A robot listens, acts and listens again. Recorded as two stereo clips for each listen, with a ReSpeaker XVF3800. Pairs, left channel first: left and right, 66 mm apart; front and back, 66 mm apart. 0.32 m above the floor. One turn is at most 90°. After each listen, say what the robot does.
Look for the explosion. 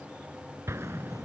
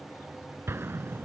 Turn 90° right.
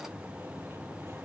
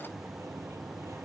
Turn 40° right.
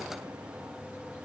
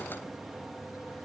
I heard an explosion from this way, but can't make it out now.